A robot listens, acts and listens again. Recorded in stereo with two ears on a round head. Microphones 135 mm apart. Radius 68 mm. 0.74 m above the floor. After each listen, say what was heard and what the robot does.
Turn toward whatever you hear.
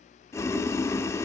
The boiling: about 20° left or 160° left. Turn 20° left.
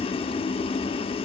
So it is at 140° left. Turn 140° left.
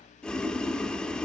Found it: boiling, straight ahead, under 1 m away.